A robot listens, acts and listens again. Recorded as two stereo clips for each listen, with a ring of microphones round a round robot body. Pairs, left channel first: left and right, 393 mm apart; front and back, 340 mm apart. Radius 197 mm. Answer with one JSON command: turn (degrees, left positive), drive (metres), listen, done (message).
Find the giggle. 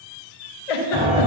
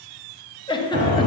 {"turn": 80}
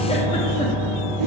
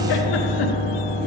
{"listen": true}
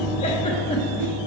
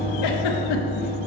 {"listen": true}
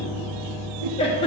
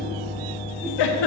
{"turn": 15}
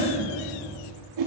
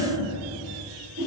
{"listen": true}
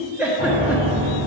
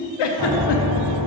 {"done": "Facing the giggle."}